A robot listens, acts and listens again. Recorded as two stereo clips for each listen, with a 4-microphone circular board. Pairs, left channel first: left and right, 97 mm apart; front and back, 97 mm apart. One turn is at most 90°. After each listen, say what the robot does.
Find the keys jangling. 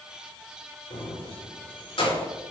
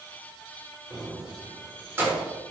Turn 90° left.
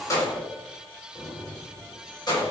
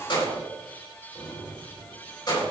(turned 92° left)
Turn 45° left.
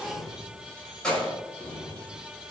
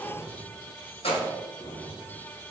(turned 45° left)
Facing the keys jangling.